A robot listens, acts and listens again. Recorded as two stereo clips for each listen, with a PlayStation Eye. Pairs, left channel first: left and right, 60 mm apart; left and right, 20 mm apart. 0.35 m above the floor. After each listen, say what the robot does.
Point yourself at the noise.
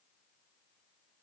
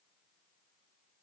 Keep listening.
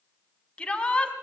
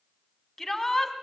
Turn 20° left.
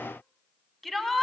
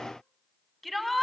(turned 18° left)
Facing the shout, 2 to 4 m away.